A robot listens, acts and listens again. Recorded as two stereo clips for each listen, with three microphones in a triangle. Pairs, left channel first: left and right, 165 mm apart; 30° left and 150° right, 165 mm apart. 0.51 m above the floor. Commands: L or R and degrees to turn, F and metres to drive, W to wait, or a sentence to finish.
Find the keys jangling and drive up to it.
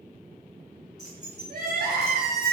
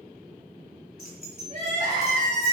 R160
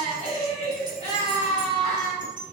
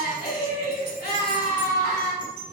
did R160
W
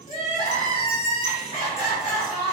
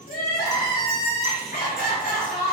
W
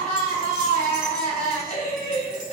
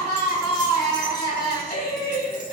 Facing where the keys jangling came from. I can't hear it now. I did not reach it.